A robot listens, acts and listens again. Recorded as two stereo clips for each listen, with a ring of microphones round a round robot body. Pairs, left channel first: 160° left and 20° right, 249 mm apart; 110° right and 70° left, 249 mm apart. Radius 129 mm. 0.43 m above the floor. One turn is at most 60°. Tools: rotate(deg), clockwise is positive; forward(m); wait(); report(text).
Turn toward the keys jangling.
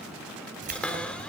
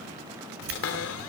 rotate(-35)
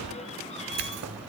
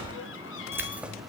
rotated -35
rotate(20)
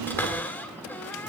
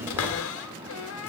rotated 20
wait()
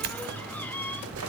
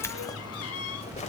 rotate(50)
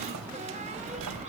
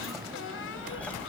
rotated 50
rotate(25)
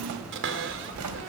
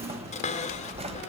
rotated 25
report("Found it: keys jangling, straight ahead.")